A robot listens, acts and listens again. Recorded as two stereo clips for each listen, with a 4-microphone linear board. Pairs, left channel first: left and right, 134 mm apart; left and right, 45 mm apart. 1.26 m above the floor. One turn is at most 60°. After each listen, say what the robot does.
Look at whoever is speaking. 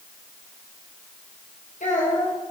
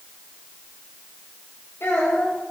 Turn 60° left.
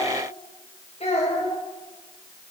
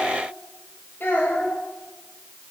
Turn 50° left.
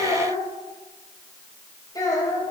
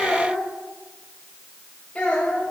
Turn 30° left.
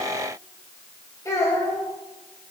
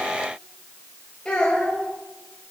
Turn 20° left.
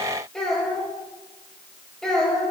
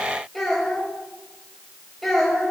Found it: a child speaking, straight ahead, 2 to 4 m away.